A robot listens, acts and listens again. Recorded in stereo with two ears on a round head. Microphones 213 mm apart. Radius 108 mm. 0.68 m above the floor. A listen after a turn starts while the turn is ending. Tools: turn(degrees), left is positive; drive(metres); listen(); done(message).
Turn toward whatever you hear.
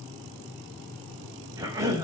turn(degrees=-30)
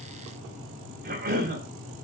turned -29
turn(degrees=-135)
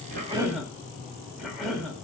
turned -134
done("Facing the cough.")